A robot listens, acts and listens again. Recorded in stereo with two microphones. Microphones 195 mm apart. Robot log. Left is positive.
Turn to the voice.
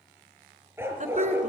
note: The woman speaking: about 40° right or 140° right.
cmd yaw -40
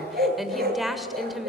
end: Found it: a woman speaking, straight ahead.